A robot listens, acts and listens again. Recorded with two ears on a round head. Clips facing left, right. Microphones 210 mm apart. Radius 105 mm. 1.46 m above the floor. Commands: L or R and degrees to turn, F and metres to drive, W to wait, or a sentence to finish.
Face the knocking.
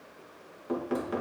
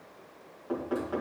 L30
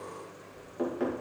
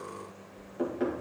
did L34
Facing the knocking, 1 to 2 m away.